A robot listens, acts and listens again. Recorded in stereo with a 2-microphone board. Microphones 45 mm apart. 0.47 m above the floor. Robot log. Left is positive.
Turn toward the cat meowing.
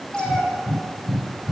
note: The cat meowing: about 25° left or 155° left.
cmd yaw +25
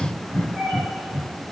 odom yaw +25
end: Facing the cat meowing.